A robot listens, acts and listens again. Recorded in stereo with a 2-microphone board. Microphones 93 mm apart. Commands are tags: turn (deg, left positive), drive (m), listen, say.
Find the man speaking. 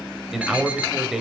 <turn deg="-30"/>
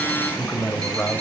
<turn deg="20"/>
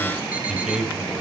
<say>Found it: a man speaking, straight ahead, 2 to 4 m away.</say>